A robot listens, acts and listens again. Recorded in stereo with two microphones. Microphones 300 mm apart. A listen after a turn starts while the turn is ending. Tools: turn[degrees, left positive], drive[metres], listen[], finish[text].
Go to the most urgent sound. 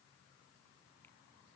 Action: listen[]
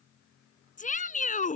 Thought: The shout: about 25° left or 155° left.
Action: turn[25]
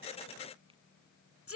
Thought: So it is at 130° left.
Action: turn[130]
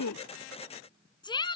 Thought: The shout is now 15° left.
Action: turn[15]
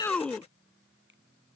Action: drive[1.0]
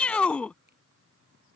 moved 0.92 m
Action: drive[1.0]
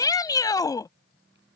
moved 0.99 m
Thought: The shout is now 15° left.
Action: turn[15]
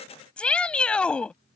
Action: drive[1.0]
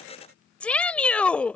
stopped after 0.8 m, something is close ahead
Action: finish[Arrived at the shout, straight ahead.]